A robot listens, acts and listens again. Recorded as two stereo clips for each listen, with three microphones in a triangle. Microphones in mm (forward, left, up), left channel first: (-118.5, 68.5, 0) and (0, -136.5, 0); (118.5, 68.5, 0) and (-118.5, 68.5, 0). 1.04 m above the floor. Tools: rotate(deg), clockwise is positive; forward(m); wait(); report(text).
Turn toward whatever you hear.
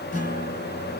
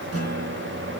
rotate(-180)
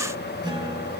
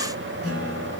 rotate(-10)
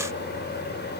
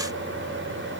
wait()
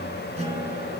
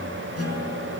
report("Found it: a guitar, straight ahead.")